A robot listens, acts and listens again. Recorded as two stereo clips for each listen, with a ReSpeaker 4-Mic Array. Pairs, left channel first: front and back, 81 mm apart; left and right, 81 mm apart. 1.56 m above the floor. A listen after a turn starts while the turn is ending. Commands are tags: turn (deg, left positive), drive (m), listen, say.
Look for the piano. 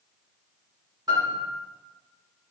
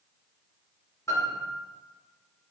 <turn deg="140"/>
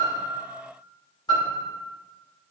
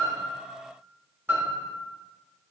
<turn deg="-30"/>
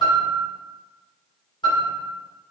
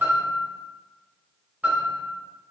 <turn deg="-25"/>
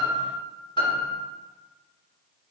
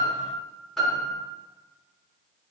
<say>Found it: a piano, straight ahead.</say>